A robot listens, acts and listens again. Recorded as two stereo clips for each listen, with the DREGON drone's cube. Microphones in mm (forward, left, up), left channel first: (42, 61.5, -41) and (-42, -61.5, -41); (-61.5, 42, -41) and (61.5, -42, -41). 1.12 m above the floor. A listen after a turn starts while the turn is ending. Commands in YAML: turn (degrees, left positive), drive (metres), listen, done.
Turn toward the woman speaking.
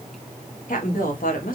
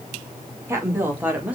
turn: 45
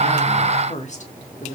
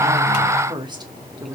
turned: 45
turn: 35
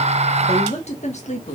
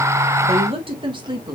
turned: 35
turn: 25
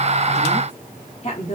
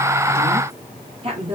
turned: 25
turn: 15
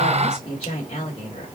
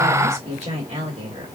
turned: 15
turn: 10
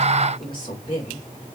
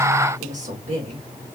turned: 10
done: "Facing the woman speaking."